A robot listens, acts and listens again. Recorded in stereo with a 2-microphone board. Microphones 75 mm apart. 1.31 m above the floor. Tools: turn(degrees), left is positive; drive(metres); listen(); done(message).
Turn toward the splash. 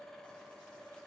listen()
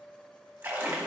turn(degrees=-25)
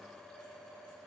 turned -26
listen()
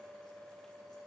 done("I heard a splash, but can't make it out now. It was about straight ahead or 130° right.")